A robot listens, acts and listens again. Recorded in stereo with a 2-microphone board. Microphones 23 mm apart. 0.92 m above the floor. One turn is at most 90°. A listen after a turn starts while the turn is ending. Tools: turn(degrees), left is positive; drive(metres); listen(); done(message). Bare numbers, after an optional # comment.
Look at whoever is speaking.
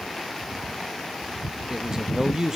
# The man speaking: about 35° right or 145° right.
turn(-35)
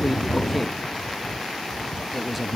done("Found it: a man speaking, straight ahead, 1 to 2 m away.")